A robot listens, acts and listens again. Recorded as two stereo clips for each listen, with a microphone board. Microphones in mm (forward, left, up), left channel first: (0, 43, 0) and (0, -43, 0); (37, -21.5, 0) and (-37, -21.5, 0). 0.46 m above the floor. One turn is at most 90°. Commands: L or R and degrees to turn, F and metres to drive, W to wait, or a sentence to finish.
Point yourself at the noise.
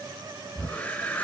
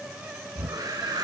L90
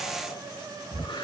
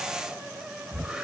L90
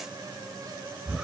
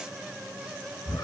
R10
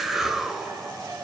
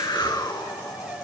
Facing the whoosh.